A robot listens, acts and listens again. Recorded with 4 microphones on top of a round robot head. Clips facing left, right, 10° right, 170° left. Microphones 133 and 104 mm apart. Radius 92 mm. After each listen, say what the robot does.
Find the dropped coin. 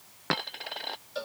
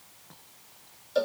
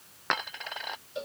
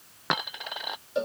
Turn 90° left.
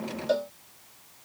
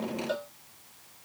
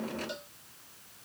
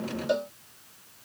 Facing where the dropped coin came from. I can't hear it now.